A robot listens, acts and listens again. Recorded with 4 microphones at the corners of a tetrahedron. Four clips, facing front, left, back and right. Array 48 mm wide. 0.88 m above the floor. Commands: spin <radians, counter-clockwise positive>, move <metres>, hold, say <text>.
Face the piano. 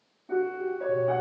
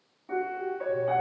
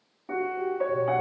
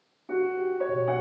spin -3.05
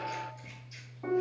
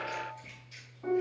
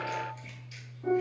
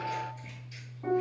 spin -0.26
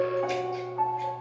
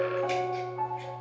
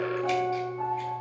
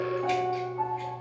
say Found it: a piano, straight ahead.